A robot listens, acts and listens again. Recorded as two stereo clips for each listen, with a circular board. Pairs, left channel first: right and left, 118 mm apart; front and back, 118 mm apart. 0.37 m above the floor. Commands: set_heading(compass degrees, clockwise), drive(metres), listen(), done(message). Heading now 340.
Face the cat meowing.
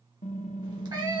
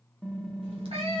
set_heading(200)
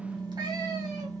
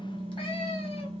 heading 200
listen()
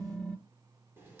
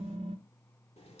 listen()
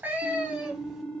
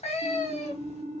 set_heading(190)
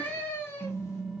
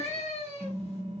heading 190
set_heading(210)
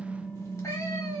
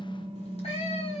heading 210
set_heading(235)
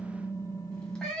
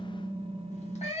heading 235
done("Found it: a cat meowing, straight ahead, 1 to 2 m away.")